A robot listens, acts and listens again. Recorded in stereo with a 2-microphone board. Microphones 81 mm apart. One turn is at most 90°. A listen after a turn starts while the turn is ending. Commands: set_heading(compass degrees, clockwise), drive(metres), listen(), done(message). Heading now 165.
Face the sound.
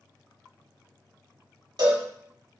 set_heading(225)
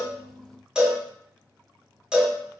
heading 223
set_heading(233)
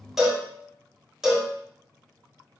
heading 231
done("Facing the cowbell, 1 to 2 m away.")